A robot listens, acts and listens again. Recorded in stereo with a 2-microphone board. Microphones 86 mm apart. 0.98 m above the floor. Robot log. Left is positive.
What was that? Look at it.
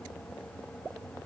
cmd idle
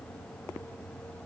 cmd idle
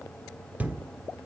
note: The thud: about 20° right or 160° right.
cmd yaw -20
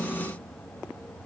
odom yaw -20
cmd idle
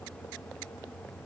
end: I heard a thud, but can't make it out now. It was about straight ahead or 140° right.